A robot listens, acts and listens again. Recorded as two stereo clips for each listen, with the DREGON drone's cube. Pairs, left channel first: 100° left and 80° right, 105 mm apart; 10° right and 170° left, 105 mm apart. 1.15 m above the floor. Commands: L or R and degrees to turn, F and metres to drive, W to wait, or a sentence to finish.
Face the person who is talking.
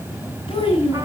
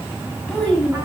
L70
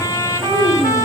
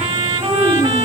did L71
W
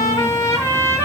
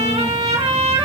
W
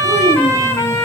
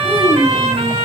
Facing where the child speaking came from. I can't hear it now.